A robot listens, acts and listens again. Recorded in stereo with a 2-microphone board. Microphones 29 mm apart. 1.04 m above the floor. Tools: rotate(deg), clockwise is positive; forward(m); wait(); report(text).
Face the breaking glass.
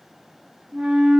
wait()
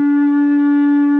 wait()
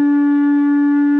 report("I can't make out breaking glass to turn to.")